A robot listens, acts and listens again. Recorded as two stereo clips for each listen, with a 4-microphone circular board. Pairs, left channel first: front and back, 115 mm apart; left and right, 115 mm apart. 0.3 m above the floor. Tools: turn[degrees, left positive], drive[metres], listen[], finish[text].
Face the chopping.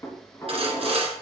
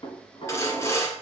Action: listen[]
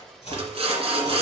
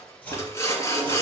Thought: The chopping: 15° left.
Action: turn[15]
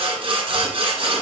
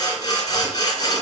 Action: listen[]
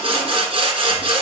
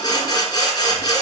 Action: listen[]
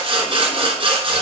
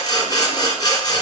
Action: finish[Facing where the chopping came from. I can't hear it now.]